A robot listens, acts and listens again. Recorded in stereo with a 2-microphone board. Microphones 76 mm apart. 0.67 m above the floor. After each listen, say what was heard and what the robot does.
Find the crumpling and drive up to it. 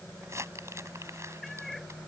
The crumpling: about 40° right or 140° right. Turn 40° right.
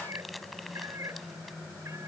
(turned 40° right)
Drive 1.0 m forward.
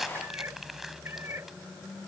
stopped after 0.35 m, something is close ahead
Blocked. The crumpling is further on, straight ahead.